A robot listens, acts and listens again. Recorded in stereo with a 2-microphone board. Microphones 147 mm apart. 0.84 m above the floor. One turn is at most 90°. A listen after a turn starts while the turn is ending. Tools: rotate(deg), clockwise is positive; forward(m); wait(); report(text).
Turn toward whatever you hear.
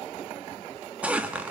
rotate(30)
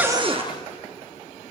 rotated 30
rotate(90)
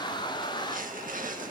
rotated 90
rotate(80)
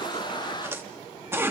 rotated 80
rotate(15)
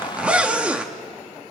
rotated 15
rotate(10)
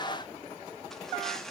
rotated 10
wait()
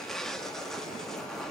report("Facing the zipper.")